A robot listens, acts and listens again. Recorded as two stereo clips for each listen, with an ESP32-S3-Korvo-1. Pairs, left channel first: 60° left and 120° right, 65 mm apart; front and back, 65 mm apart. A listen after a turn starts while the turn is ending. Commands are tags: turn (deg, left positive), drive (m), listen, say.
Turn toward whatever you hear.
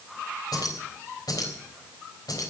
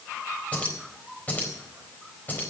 <turn deg="60"/>
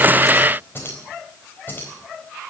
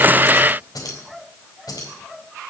<say>Found it: keys jangling, straight ahead.</say>